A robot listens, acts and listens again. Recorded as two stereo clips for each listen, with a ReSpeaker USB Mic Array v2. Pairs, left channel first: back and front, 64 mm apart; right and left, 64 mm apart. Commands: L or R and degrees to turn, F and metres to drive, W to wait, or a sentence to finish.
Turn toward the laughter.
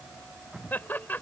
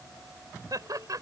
L115
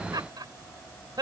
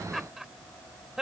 L10
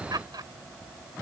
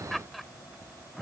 Facing the laughter.